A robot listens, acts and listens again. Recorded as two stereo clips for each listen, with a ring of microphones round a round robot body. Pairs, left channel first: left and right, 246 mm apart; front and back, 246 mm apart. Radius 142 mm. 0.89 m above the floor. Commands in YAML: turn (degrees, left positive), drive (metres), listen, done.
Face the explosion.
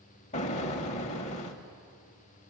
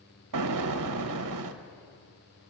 turn: 155
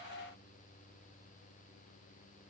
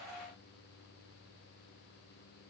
done: "I heard an explosion from this way, but can't make it out now."